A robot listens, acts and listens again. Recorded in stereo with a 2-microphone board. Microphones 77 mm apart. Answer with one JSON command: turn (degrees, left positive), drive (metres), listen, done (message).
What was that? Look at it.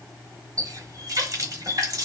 {"turn": -50}
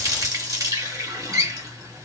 {"turn": -70}
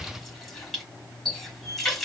{"done": "Found it: a running tap, straight ahead."}